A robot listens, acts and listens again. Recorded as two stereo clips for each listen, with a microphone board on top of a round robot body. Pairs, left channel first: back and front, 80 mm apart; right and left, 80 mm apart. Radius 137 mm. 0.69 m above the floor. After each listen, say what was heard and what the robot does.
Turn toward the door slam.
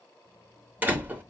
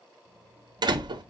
The door slam: 65° left. Turn 65° left.
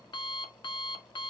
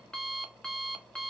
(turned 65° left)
Facing where the door slam came from. I can't hear it now.